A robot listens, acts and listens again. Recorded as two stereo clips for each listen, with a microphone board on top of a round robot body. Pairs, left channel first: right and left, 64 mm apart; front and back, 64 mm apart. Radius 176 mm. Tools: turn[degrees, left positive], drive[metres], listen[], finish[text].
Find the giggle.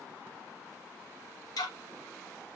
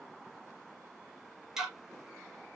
Action: listen[]
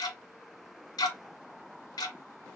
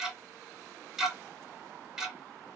Action: listen[]
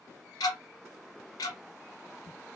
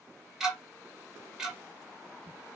Action: finish[I can't make out a giggle, only ticking.]